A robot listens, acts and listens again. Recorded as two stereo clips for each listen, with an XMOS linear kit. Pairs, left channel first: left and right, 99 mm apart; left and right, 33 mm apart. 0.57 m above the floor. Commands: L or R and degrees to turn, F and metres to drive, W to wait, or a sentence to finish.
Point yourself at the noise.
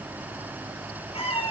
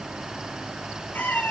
L90
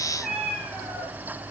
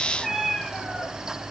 Facing the cat meowing, over 4 m away.